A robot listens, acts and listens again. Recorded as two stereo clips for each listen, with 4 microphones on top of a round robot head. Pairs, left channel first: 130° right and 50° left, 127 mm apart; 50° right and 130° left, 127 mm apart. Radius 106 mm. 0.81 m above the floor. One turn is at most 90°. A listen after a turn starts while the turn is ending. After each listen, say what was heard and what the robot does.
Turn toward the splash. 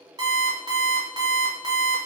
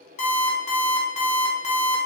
Keep listening.
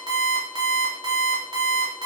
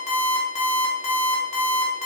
Keep listening.
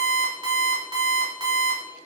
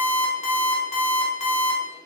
I can't make out a splash, only an alarm clock.